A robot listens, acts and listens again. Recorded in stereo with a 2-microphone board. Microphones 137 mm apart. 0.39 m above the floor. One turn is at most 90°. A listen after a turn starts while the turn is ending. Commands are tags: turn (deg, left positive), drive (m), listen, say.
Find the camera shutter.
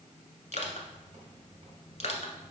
<turn deg="-65"/>
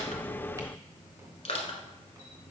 <listen/>
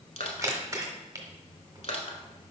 <turn deg="-30"/>
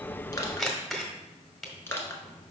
<say>Facing the camera shutter, 1 to 2 m away.</say>